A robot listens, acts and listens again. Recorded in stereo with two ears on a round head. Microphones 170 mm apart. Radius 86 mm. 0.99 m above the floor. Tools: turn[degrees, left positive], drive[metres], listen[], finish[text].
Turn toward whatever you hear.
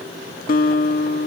Thought: The guitar: about 45° left or 135° left.
Action: turn[45]
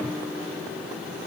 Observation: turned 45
Action: listen[]
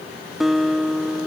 Action: finish[Facing the guitar.]